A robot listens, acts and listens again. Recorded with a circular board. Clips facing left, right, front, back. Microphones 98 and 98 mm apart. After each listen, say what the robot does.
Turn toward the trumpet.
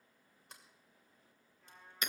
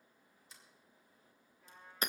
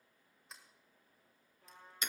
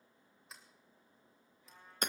Facing the trumpet.